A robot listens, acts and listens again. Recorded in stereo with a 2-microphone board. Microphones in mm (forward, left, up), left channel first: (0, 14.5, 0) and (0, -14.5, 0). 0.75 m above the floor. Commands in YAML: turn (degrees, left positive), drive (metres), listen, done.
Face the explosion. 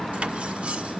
listen: true
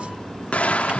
turn: 50
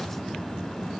listen: true
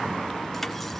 done: "I heard an explosion, but can't make it out now. It was about straight ahead or 80° left."